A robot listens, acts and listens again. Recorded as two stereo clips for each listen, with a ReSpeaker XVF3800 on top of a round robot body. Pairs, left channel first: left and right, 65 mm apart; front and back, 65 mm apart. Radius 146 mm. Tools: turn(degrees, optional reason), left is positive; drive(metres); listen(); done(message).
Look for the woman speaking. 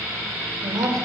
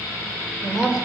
turn(degrees=-100, reason="The woman speaking: 100° right.")
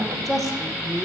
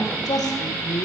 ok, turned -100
done("Found it: a woman speaking, straight ahead, 2 to 4 m away.")